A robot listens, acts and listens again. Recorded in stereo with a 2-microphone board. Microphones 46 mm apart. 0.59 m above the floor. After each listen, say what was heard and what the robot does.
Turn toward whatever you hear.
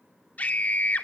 The scream: about 35° left or 145° left. Turn 35° left.
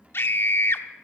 So it is at 100° left. Turn 100° left.
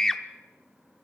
The scream is now 10° left. Turn 10° left.
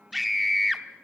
Found it: a scream, straight ahead, 1 to 2 m away.